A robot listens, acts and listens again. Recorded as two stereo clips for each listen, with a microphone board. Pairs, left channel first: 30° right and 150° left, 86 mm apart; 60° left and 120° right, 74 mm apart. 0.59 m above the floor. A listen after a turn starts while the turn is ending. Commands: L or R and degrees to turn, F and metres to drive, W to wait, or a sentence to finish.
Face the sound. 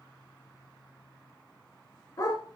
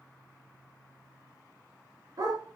R85
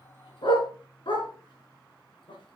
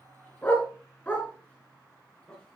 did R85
R10
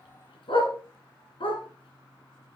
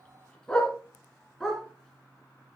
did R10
R25
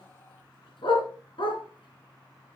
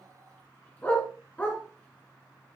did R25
R10
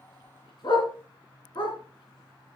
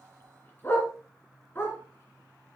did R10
Found it: a dog barking, straight ahead.